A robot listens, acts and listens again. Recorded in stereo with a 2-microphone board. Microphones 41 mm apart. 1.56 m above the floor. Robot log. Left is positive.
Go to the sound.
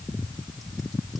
cmd idle
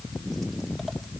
cmd idle
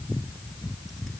end: I can't make out anything to turn to.